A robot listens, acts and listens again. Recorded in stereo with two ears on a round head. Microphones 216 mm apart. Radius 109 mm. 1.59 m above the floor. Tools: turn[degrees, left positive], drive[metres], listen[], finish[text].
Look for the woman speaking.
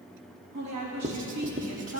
Action: turn[-90]
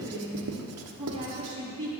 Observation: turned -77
Thought: So it is at 20° right.
Action: turn[-20]
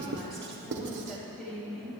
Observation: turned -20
Action: finish[Found it: a woman speaking, straight ahead.]